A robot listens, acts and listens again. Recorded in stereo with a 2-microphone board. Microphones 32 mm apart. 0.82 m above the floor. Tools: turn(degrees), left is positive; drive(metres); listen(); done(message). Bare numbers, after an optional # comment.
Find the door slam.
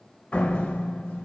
# The door slam: about 60° left or 120° left.
turn(60)
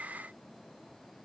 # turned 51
listen()
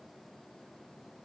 done("I heard a door slam, but can't make it out now. It was about 10° left or 70° left.")